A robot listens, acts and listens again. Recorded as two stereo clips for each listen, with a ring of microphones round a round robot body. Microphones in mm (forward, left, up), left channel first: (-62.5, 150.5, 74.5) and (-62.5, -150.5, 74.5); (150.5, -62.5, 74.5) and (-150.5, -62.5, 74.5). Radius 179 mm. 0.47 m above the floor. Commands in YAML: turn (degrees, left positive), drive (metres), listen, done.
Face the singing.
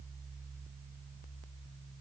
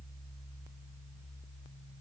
listen: true
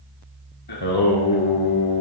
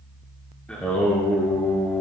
turn: 85
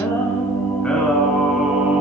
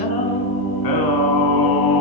done: "Facing the singing, 1 to 2 m away."